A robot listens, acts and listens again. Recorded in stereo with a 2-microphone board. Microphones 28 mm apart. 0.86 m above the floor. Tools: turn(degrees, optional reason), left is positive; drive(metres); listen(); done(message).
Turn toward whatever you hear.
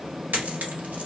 turn(degrees=-90)
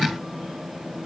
done("Facing where the dropped coin came from. I can't hear it now.")